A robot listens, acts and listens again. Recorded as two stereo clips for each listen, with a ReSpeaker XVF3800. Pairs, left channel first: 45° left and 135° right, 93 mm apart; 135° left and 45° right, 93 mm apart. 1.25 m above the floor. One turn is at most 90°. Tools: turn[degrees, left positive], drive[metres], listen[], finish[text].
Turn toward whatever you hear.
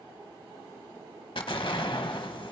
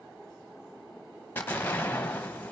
Thought: The explosion: 65° left.
Action: turn[65]
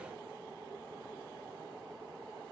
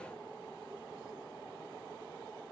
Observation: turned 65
Action: finish[Facing where the explosion came from. I can't hear it now.]